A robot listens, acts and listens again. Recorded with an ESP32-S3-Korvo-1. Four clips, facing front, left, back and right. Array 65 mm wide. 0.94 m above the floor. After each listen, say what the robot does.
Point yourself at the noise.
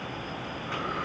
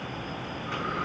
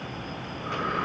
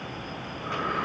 Turn 135° right.
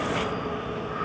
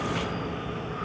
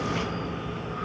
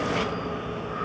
Turn 35° right.
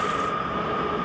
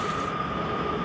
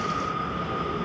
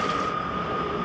Facing the breathing, over 4 m away.